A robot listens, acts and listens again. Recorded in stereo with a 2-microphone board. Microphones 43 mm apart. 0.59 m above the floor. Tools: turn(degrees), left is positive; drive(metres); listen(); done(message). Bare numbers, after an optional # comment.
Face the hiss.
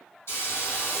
# The hiss: about 70° left or 110° left.
turn(70)
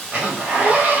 done("Facing the hiss, 1 to 2 m away.")